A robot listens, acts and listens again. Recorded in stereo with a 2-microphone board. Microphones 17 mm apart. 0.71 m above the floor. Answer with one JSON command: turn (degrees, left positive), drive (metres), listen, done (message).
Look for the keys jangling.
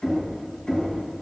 {"listen": true}
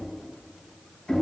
{"listen": true}
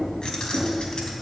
{"turn": 60}
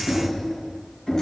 {"listen": true}
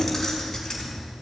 {"turn": 20}
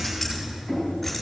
{"done": "Facing the keys jangling, over 4 m away."}